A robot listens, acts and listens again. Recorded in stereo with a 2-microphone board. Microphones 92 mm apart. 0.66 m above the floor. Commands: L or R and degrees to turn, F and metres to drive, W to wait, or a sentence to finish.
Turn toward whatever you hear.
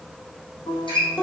L60
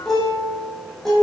Found it: a guitar, straight ahead, over 4 m away.